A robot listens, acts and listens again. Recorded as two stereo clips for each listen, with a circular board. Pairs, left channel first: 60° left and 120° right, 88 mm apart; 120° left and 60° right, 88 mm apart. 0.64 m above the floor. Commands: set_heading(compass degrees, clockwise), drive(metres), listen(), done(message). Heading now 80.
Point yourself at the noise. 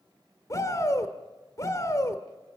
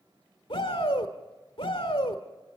set_heading(330)
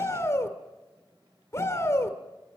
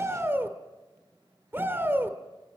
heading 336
done("Facing the shout.")